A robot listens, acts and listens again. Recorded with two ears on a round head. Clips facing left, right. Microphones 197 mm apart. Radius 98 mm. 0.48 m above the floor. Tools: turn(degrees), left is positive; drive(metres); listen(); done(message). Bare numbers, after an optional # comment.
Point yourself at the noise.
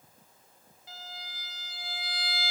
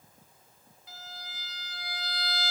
# The violin: about 75° right or 105° right.
turn(-75)
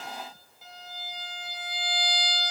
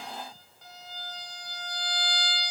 done("Facing the violin.")